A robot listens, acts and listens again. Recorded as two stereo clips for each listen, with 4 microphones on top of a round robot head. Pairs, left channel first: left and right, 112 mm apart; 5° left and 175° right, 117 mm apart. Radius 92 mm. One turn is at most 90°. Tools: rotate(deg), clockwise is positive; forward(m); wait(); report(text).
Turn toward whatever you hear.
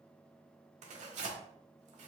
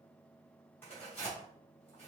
rotate(70)
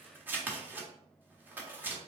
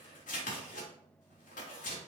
rotate(15)
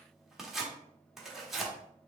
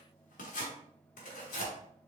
report("Found it: tearing paper, straight ahead.")